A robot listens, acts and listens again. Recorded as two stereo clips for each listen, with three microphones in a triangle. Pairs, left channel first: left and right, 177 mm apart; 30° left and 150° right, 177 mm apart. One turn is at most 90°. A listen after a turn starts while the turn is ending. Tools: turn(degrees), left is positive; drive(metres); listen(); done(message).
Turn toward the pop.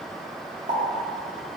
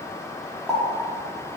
turn(degrees=-55)
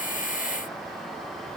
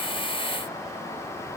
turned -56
done("Facing where the pop came from. I can't hear it now.")